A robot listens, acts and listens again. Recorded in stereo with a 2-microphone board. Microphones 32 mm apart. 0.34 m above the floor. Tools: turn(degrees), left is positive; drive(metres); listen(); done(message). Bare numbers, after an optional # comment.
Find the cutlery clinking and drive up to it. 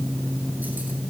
listen()
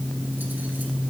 listen()
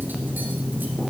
done("I can't make out cutlery clinking to turn to.")